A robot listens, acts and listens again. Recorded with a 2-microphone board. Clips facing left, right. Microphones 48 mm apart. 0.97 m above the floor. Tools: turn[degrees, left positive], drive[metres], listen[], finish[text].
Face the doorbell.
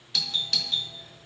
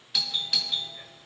Action: turn[-30]
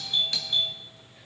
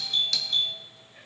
Thought: So it is at 25° left.
Action: turn[25]
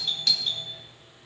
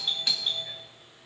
Thought: The doorbell is now 15° right.
Action: turn[-15]
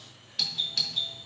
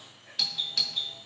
Action: finish[Facing the doorbell.]